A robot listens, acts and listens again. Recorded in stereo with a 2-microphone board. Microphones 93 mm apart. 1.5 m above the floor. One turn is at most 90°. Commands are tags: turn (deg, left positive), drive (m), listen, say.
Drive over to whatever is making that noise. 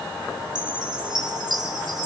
<turn deg="-50"/>
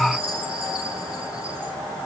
<turn deg="-75"/>
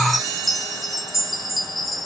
<drive m="1.0"/>
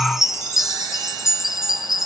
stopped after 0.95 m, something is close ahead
<say>Arrived at the chime, straight ahead.</say>